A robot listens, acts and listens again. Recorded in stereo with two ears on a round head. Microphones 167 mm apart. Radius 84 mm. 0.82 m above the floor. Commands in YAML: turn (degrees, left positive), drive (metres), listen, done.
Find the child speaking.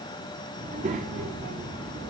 turn: -55
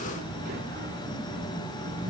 turn: -50
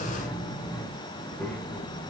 turn: 10
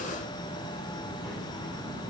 done: "Facing the child speaking."